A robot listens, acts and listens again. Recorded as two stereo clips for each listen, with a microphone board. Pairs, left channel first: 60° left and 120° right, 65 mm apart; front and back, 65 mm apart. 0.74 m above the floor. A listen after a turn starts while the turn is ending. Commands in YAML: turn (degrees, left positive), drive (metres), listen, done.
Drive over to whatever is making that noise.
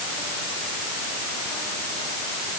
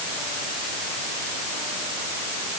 listen: true
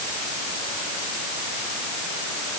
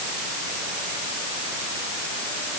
listen: true
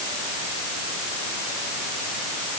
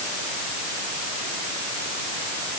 done: "I can't make out anything."